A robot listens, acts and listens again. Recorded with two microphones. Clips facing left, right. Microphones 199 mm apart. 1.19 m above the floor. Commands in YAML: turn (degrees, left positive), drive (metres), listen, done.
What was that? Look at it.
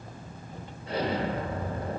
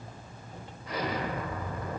turn: 30
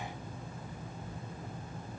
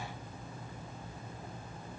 listen: true
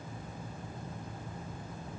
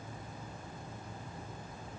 done: "I heard an explosion, but can't make it out now. It was about straight ahead or 120° left."